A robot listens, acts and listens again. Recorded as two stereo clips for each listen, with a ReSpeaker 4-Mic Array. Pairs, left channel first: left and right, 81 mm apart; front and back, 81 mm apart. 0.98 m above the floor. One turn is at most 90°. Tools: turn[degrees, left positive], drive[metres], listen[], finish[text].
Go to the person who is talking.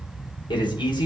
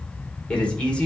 Thought: The man speaking: 75° left.
Action: turn[75]
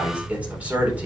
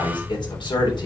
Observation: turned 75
Thought: The man speaking is now 20° right.
Action: turn[-20]
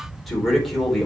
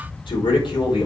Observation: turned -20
Action: drive[1.0]
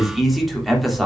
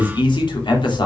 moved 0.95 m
Action: drive[1.0]
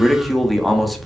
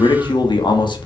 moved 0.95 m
Action: drive[1.0]
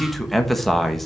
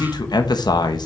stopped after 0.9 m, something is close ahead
Action: finish[I am next to the man speaking.]